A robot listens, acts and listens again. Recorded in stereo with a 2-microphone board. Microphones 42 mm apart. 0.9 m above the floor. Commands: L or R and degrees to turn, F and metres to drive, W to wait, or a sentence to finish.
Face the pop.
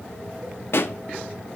L70
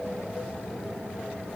W
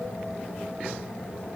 I heard a pop, but can't make it out now. It was about straight ahead or 40° left.